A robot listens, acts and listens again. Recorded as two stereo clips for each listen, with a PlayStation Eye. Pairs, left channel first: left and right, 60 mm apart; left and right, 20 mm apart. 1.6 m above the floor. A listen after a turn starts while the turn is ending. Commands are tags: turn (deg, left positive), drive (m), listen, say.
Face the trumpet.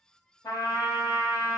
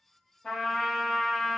<turn deg="90"/>
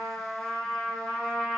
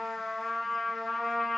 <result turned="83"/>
<say>Facing the trumpet, under 1 m away.</say>